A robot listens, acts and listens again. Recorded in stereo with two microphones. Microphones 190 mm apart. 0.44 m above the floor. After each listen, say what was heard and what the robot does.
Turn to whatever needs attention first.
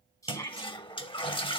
The shout: about 15° left or 165° left. Turn 15° left.
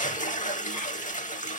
Keep listening.
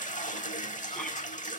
Keep listening.
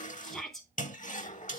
Facing the shout, 2 to 4 m away.